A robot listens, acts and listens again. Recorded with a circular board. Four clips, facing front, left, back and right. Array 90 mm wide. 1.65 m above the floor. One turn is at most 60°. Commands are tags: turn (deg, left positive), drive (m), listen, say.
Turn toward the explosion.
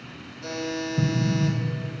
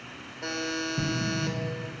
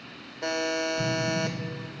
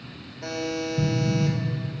<turn deg="45"/>
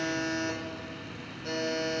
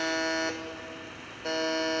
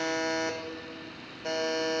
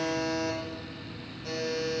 <say>I heard an explosion from this way, but can't make it out now.</say>